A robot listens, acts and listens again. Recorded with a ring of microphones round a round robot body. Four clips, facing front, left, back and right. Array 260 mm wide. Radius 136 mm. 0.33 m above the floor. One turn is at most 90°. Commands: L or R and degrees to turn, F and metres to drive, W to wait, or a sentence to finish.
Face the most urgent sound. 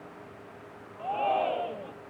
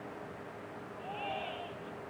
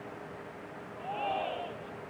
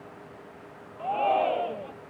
R65
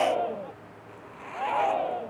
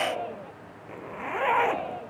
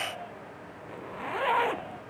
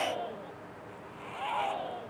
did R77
L10
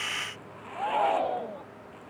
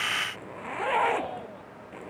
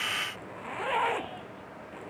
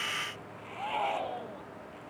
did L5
Facing the shout.